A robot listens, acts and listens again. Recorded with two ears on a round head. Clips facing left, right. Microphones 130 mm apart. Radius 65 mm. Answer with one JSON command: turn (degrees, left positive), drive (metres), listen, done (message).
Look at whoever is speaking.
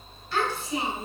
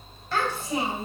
{"turn": -40}
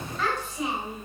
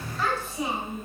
{"done": "Found it: a child speaking, straight ahead, 2 to 4 m away."}